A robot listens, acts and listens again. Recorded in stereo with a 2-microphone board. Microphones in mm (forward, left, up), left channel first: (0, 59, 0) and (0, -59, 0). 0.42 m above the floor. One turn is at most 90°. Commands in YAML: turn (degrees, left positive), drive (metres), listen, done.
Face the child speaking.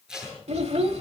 turn: -65
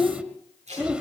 turn: -10
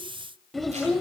done: "Facing the child speaking."